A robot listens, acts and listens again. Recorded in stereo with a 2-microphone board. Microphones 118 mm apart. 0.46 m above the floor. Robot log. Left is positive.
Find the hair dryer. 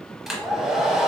cmd yaw -30
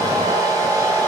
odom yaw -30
note: So it is at 150° right.
cmd yaw -150
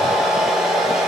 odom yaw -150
end: Facing the hair dryer.